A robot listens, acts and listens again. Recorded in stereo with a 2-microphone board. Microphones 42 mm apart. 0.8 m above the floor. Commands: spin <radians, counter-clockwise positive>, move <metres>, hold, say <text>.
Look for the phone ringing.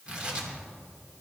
hold
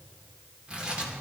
hold
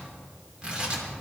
say I can't make out a phone ringing, only tearing paper.